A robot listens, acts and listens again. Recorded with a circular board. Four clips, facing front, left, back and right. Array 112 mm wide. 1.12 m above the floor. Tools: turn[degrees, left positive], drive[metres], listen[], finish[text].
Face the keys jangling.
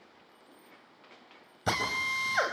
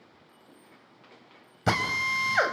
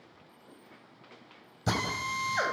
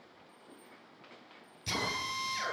Thought: The keys jangling: 45° left.
Action: turn[45]
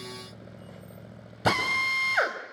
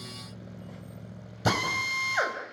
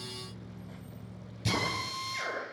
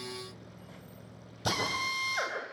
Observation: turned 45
Action: listen[]
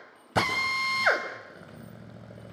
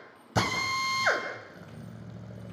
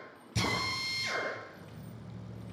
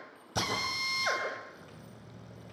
Action: listen[]
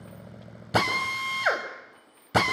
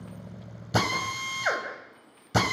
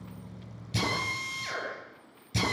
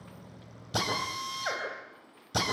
Action: finish[Found it: keys jangling, straight ahead.]